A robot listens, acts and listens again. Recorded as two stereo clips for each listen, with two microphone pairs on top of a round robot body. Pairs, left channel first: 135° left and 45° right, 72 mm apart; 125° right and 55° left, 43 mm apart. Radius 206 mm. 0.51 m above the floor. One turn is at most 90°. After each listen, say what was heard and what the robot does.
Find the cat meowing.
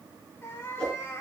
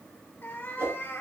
The cat meowing: 170° right. Turn 90° right.
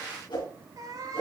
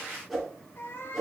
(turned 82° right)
The cat meowing is now 85° right. Turn 85° right.
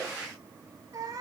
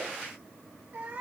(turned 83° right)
Found it: a cat meowing, straight ahead, 1 to 2 m away.